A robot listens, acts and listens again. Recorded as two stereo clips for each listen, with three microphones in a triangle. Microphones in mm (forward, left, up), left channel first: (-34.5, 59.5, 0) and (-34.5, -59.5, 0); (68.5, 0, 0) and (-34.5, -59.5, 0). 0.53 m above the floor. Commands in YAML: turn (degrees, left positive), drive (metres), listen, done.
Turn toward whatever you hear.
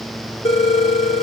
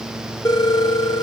turn: 80
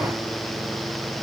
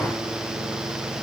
listen: true
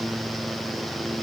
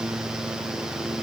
listen: true
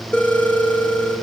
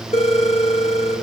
turn: 15
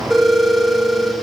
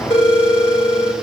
done: "Found it: a phone ringing, straight ahead."